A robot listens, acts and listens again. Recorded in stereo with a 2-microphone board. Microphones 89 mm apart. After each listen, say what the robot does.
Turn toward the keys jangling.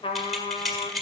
Turn 30° left.
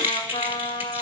Turn 25° right.
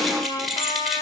Facing the keys jangling.